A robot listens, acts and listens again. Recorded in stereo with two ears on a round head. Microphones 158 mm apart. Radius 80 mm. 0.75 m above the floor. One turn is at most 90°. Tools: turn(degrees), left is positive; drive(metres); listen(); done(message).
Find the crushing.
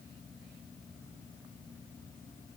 listen()
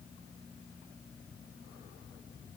listen()
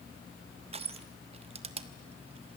turn(degrees=-35)
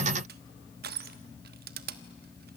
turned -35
turn(degrees=-90)
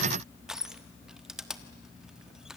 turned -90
done("Found it: crushing, straight ahead.")